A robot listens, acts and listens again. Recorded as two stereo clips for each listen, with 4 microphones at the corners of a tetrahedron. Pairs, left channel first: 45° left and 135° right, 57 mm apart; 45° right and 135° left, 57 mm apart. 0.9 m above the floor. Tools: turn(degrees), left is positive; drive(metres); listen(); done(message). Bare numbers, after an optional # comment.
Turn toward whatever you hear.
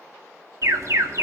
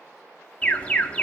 # The alarm: 110° right.
turn(-110)
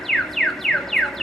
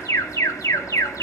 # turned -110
# The alarm is now 40° right.
turn(-40)
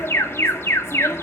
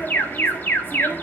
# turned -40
# The alarm is now 10° left.
turn(10)
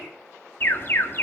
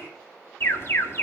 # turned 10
done("Facing the alarm, 1 to 2 m away.")